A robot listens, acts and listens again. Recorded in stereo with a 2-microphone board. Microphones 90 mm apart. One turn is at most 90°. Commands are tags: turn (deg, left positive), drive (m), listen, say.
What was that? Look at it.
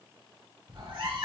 <turn deg="-70"/>
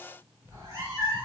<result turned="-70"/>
<turn deg="-35"/>
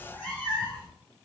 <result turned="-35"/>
<turn deg="15"/>
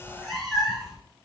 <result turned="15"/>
<say>Found it: a cat meowing, straight ahead.</say>